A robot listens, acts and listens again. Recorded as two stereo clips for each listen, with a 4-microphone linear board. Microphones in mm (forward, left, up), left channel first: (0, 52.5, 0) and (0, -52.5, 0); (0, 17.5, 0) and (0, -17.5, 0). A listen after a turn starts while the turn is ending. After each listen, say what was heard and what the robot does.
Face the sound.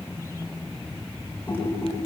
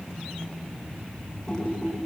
The typing on a keyboard: about 15° left or 165° left. Turn 15° left.
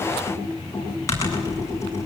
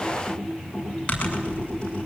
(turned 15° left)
So it is at 150° left. Turn 150° left.
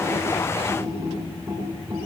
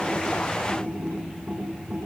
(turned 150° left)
The typing on a keyboard is now 20° right. Turn 20° right.
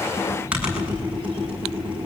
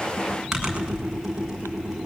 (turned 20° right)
The typing on a keyboard is now 10° right. Turn 10° right.
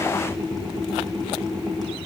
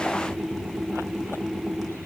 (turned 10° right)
Facing the typing on a keyboard, over 4 m away.